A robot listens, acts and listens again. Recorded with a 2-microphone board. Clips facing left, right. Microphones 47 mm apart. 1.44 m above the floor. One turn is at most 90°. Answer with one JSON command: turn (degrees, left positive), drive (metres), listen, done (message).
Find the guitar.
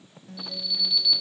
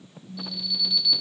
{"turn": 90}
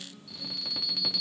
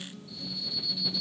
{"done": "Facing the guitar."}